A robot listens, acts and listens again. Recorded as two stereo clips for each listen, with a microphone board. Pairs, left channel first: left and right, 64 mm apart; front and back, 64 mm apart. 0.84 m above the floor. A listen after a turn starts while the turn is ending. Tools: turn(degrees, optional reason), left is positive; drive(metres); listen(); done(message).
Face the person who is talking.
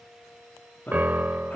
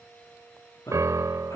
turn(degrees=30, reason="The man speaking: 30° left.")
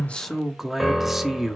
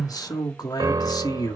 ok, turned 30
done("Facing the man speaking, 1 to 2 m away.")